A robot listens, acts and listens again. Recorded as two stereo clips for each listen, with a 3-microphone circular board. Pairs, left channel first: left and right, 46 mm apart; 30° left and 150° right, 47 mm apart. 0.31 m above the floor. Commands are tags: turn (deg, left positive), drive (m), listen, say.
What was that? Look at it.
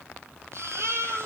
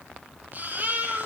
<turn deg="-100"/>
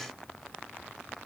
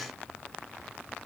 <listen/>
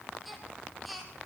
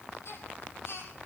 <say>Facing the baby crying, over 4 m away.</say>